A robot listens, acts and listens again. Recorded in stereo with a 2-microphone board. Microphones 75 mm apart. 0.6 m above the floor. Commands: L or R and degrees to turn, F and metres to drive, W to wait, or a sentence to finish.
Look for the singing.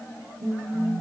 R40
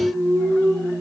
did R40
R95
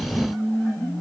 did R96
L10
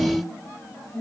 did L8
L10
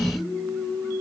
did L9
Found it: singing, straight ahead.